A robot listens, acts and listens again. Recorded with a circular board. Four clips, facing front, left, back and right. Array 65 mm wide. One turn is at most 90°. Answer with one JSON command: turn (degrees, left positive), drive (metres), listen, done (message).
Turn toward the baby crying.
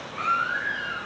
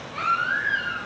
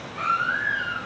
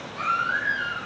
{"turn": 90}
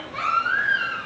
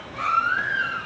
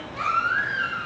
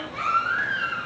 {"turn": -20}
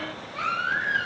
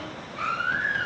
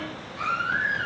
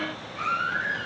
{"done": "Found it: a baby crying, straight ahead, over 4 m away."}